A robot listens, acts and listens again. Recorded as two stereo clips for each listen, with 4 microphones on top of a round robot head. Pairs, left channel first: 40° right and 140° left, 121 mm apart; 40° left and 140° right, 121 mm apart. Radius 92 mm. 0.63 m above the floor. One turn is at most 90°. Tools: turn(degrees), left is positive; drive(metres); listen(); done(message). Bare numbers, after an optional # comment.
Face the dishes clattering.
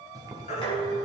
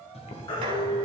# The dishes clattering: 90° right.
turn(-90)
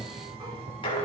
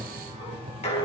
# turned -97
done("Facing the dishes clattering.")